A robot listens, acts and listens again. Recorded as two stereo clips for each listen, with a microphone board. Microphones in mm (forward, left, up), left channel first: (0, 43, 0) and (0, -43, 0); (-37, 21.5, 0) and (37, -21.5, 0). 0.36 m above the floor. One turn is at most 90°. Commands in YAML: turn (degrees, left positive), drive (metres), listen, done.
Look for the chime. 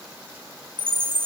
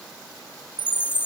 turn: -90
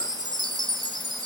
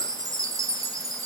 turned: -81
turn: -65
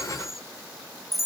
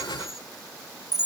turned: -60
done: "Found it: a chime, straight ahead."